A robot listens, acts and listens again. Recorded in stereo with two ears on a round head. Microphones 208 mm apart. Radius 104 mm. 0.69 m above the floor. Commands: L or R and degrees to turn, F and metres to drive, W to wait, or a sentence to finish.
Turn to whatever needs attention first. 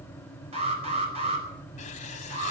R25
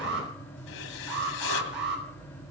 R125
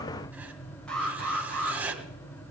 Facing the alarm.